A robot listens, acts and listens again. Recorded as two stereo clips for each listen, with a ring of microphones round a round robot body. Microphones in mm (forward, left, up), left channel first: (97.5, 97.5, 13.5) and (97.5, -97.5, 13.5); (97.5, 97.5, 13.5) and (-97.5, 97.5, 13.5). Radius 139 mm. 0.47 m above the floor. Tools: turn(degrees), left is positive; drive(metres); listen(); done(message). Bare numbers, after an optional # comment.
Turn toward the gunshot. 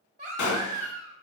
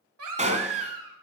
# The gunshot: 125° left.
turn(125)
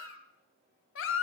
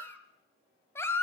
done("I heard a gunshot from this way, but can't make it out now.")